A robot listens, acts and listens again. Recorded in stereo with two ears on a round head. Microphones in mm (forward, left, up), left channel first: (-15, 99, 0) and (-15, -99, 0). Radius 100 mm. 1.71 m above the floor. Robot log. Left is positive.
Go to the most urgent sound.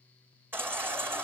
cmd yaw -30
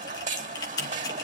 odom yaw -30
note: So it is at 135° right.
cmd yaw -135
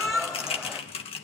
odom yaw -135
cmd fwd 1.0
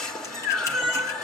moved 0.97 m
cmd fwd 1.0
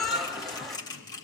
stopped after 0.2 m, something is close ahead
end: I am next to the baby crying.